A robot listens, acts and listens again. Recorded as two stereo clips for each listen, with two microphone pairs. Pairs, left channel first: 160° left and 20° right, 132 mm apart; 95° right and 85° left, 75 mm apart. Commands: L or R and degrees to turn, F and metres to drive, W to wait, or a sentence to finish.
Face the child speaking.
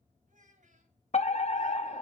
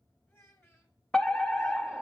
R40
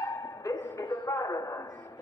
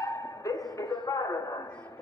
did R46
W
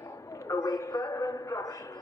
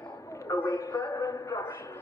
W
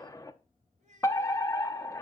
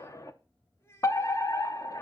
R45
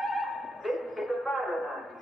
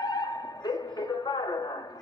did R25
R20
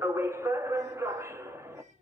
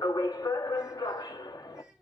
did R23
W
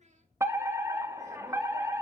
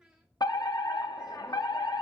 Facing the child speaking, 2 to 4 m away.